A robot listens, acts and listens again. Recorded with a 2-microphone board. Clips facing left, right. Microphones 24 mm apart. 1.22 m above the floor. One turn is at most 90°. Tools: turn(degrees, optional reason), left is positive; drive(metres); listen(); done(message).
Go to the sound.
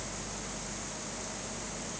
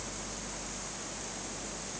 listen()
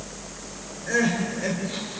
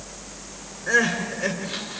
turn(degrees=-40, reason="The crying: about 40° right or 140° right.")
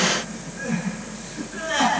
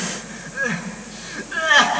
turn(degrees=-90, reason="So it is at 95° right.")
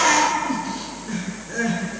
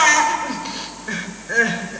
turn(degrees=-45, reason="The crying is now 45° right.")
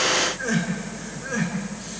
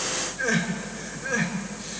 drive(metres=1.0)
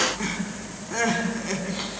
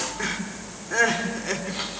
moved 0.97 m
turn(degrees=-10, reason="The crying is now 10° right.")
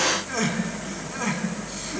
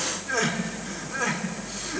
drive(metres=1.0)
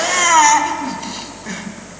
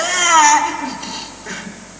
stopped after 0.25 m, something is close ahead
done("Arrived at the crying, straight ahead.")